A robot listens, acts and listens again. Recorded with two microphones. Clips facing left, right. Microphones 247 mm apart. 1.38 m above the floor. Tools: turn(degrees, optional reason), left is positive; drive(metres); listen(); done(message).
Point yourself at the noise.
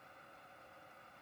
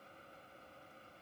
listen()
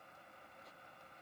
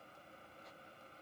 listen()
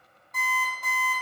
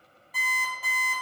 turn(degrees=-30)
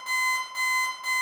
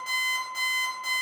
turn(degrees=-145, reason="So it is at 145° right.")
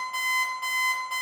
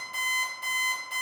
turn(degrees=-20, reason="The alarm clock is now 20° right.")
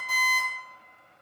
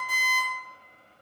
done("Found it: an alarm clock, straight ahead, 1 to 2 m away.")